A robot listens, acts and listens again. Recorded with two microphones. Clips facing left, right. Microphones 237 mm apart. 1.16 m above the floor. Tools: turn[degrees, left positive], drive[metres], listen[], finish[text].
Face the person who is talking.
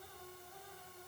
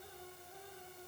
Action: listen[]
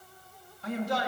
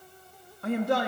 Thought: The man speaking: about 55° right or 125° right.
Action: turn[-55]
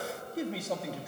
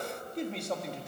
Action: finish[Found it: a man speaking, straight ahead, 1 to 2 m away.]